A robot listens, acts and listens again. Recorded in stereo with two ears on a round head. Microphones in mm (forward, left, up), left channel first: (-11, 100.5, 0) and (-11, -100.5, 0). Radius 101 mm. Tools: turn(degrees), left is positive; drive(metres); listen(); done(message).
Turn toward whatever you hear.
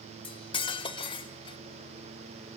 turn(degrees=25)
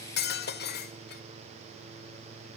turn(degrees=130)
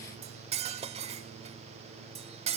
turn(degrees=-30)
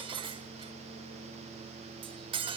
turn(degrees=-25)
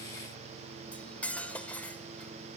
done("Facing the cutlery clinking, 1 to 2 m away.")